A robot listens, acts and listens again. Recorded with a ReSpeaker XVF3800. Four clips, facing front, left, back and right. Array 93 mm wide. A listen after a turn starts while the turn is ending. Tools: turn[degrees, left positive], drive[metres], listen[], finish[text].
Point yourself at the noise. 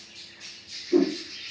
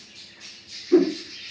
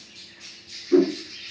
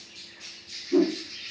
Thought: The whoosh: 140° left.
Action: turn[140]
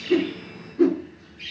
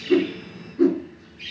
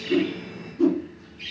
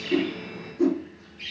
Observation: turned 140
Thought: The whoosh is now 40° left.
Action: turn[40]
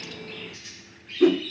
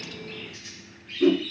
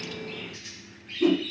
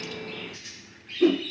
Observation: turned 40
Action: finish[Facing the whoosh, 2 to 4 m away.]